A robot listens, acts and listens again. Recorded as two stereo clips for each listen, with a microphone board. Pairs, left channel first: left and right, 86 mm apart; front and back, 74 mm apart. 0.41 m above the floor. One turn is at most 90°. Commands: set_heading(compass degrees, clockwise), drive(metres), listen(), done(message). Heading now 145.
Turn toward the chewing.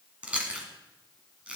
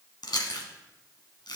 set_heading(160)
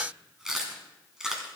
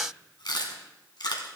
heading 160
done("Facing the chewing, 1 to 2 m away.")